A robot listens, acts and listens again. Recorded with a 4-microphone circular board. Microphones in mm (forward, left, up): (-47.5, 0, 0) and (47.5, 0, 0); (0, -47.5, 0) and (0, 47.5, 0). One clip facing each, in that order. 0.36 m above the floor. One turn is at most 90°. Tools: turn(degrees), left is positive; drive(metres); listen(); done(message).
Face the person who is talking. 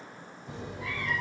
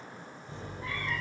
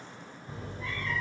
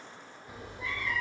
listen()
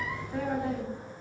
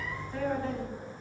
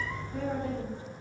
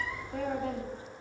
turn(degrees=90)
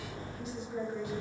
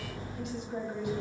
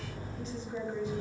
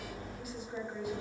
turn(degrees=10)
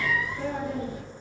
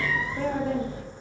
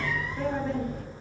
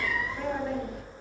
done("Facing the woman speaking, 2 to 4 m away.")